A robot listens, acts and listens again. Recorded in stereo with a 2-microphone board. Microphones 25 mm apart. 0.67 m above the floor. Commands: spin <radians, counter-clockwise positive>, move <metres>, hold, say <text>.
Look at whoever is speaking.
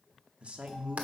spin -0.87
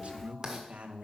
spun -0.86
spin -1.22
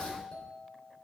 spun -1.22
hold
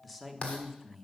say Found it: a man speaking, straight ahead.